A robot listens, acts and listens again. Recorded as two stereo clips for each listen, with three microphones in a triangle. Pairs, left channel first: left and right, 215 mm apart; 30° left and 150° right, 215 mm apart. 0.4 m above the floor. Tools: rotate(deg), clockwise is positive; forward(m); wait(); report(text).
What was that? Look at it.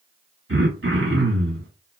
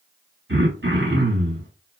rotate(115)
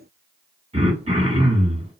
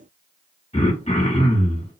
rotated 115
rotate(30)
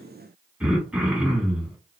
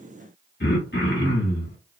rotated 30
report("Found it: throat clearing, straight ahead.")